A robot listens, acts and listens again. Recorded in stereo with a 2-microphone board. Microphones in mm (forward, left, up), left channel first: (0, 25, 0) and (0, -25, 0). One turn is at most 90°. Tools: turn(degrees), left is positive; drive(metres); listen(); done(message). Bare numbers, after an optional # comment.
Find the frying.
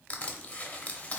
listen()
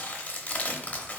listen()
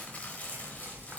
# The frying: about 45° right or 135° right.
turn(-45)
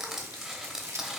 # So it is at 85° right.
turn(-85)
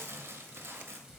# The frying is now 15° right.
turn(-15)
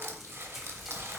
done("Found it: frying, straight ahead, under 1 m away.")